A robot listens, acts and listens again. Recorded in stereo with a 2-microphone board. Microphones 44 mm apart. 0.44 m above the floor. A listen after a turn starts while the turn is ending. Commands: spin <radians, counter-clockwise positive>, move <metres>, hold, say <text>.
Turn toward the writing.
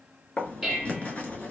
spin 0.52
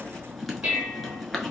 say Found it: writing, straight ahead.